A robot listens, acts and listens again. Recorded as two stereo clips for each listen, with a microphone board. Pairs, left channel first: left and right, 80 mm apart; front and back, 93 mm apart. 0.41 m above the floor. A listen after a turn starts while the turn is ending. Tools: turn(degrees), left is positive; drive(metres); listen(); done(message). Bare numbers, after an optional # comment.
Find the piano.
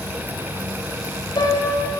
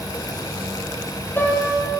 # The piano: 70° left.
turn(70)
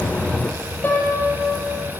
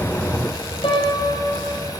# The piano is now 25° left.
turn(25)
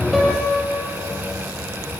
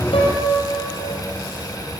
done("Found it: a piano, straight ahead.")